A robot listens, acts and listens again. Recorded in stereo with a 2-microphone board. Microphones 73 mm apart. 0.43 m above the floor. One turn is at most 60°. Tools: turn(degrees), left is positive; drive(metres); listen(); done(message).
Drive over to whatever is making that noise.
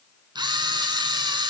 turn(degrees=-60)
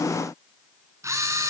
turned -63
turn(degrees=-40)
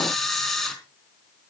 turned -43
drive(metres=1.0)
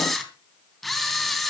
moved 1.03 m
drive(metres=1.0)
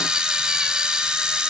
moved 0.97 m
turn(degrees=-10)
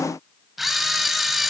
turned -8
drive(metres=1.0)
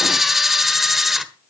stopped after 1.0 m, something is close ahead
done("I am next to the camera shutter.")